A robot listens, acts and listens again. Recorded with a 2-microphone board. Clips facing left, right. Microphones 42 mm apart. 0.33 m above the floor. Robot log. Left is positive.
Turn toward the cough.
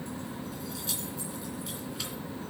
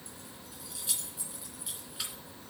cmd idle
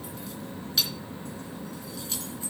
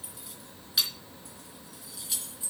cmd idle
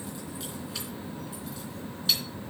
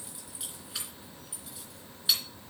end: I can't make out a cough to turn to.